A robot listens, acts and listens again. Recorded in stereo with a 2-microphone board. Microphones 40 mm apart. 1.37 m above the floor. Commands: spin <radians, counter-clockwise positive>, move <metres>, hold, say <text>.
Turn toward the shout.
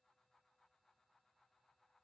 hold
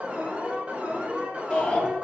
spin 0.52
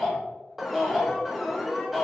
spin -0.26
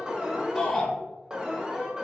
say Found it: a shout, straight ahead, 1 to 2 m away.